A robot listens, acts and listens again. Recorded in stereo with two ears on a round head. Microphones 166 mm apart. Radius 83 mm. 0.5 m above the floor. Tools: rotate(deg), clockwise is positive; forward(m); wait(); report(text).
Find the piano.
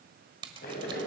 wait()
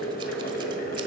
wait()
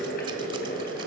report("I can't make out a piano to turn to.")